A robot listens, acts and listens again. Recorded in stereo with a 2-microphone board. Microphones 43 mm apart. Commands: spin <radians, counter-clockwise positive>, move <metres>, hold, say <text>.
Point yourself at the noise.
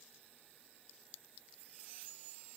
hold
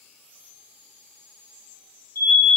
spin 1.13
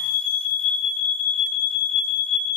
spin 0.26
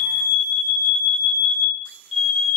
say Found it: an alarm, straight ahead.